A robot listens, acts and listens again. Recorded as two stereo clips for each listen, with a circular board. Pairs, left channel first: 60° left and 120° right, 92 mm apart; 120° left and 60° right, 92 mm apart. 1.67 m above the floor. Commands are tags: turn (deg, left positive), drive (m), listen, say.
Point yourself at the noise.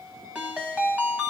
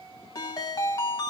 <turn deg="165"/>
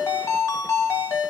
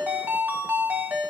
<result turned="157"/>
<say>Facing the ringtone, 1 to 2 m away.</say>